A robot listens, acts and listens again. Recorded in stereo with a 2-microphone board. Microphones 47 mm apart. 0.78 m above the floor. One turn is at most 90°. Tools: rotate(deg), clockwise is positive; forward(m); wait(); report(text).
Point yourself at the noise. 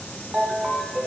rotate(30)
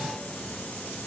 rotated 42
wait()
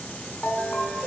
rotate(-30)
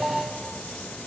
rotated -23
report("Facing the ringtone, 1 to 2 m away.")